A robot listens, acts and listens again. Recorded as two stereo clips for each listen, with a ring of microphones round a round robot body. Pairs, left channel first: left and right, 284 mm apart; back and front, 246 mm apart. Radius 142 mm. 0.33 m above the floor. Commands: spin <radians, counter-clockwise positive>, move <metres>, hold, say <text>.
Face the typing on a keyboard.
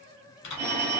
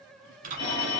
spin 1.05
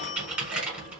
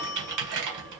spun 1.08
say Facing the typing on a keyboard, 1 to 2 m away.